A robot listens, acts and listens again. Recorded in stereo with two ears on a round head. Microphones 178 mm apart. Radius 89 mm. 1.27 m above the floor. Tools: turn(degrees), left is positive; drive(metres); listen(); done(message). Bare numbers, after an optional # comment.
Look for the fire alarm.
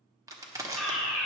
turn(30)
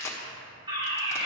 # So it is at 25° right.
turn(-25)
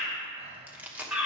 done("Facing the fire alarm.")